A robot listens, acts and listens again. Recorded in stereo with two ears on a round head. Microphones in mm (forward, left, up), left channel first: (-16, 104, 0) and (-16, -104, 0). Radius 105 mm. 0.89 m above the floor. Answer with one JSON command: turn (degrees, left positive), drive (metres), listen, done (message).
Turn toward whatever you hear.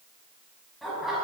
{"turn": 30}
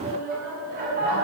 {"turn": -40}
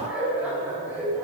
{"turn": -10}
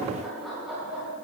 {"done": "Found it: laughter, straight ahead, over 4 m away."}